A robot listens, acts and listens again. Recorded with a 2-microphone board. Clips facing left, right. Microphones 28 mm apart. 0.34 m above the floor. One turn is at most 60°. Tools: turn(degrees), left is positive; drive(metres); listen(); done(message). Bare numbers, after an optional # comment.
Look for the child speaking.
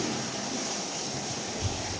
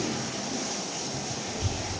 turn(-60)
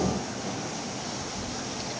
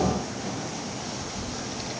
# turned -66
# So it is at 30° right.
turn(-30)
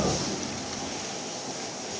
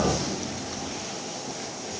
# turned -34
listen()
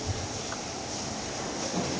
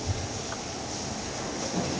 done("Found it: a child speaking, straight ahead.")